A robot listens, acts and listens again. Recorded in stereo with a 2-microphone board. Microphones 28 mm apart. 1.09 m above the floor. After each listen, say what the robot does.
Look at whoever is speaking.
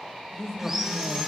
Turn 30° left.
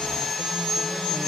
Keep listening.
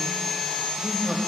Facing the woman speaking.